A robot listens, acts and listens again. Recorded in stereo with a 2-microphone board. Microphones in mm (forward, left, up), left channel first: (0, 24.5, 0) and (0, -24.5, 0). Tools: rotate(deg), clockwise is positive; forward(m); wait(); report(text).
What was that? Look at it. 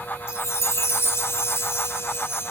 rotate(-60)
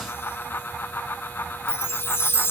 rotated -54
rotate(-55)
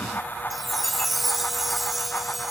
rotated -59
report("Facing the chime.")